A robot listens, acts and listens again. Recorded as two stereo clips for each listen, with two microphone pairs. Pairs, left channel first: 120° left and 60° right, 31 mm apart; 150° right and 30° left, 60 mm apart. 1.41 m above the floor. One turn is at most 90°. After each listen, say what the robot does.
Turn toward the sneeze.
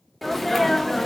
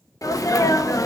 Turn 90° right.
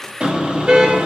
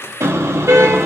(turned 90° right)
Turn 65° right.
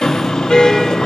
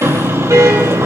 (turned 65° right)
I heard a sneeze from this way, but can't make it out now.